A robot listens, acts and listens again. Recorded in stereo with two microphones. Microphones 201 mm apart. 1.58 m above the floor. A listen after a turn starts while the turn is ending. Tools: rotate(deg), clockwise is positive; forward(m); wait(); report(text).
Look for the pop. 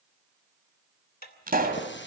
rotate(40)
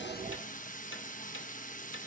wait()
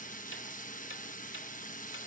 report("I heard a pop, but can't make it out now. It was about straight ahead or 100° right.")